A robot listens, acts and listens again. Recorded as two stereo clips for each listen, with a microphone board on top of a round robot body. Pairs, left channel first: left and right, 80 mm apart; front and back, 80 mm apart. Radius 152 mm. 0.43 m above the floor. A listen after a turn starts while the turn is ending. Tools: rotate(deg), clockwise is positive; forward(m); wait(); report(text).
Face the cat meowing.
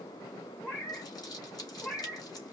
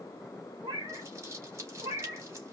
rotate(-160)
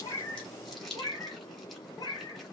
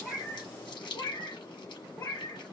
rotate(-50)
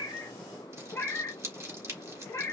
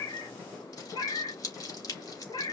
rotate(-25)
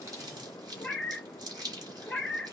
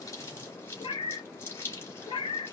report("Facing the cat meowing.")